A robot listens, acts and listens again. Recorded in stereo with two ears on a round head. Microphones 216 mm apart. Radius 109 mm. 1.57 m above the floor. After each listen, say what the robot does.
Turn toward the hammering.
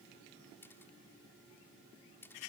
Keep listening.
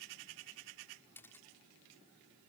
Keep listening.
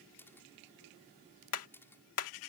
Turn 65° left.
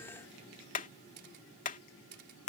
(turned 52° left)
Turn 35° left.
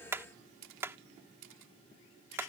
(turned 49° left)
Turn 10° right.
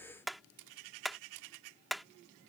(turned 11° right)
Found it: hammering, straight ahead.